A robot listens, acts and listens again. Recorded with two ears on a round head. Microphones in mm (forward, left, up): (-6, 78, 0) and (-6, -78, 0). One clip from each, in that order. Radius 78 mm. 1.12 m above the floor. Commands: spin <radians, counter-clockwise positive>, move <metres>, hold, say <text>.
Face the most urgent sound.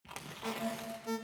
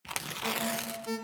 spin -0.52
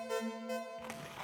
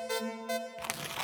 spin -2.44
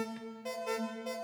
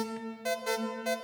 spin -0.61
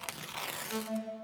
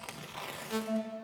say Found it: an alarm, straight ahead, 1 to 2 m away.